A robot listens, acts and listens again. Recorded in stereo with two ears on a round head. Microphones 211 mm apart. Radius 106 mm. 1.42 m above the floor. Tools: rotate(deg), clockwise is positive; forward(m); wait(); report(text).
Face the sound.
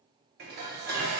rotate(40)
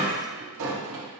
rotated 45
rotate(90)
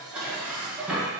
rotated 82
report("Facing the dishes clattering, under 1 m away.")